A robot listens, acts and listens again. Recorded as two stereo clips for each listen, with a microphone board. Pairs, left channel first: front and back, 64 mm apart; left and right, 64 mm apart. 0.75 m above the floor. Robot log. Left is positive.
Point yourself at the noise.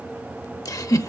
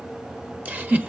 note: The giggle: 25° right.
cmd yaw -25
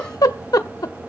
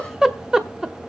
note: The giggle is now 10° right.
cmd yaw -10
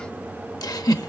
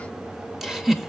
end: Facing the giggle.